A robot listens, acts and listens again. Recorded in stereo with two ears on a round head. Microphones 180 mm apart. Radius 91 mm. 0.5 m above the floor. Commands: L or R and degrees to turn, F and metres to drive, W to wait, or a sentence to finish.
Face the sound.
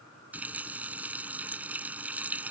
R30
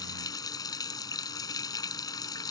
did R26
L20
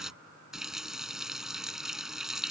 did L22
Found it: a running tap, straight ahead.